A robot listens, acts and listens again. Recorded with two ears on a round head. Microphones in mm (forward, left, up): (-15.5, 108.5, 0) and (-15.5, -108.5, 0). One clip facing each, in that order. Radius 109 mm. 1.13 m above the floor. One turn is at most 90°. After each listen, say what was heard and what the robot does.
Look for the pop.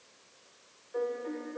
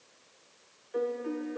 Keep listening.
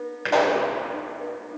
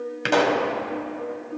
The pop: about 45° right or 135° right. Turn 45° right.
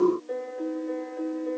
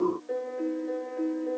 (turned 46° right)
Keep listening.
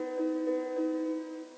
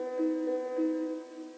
I heard a pop, but can't make it out now. It was about straight ahead or 90° right.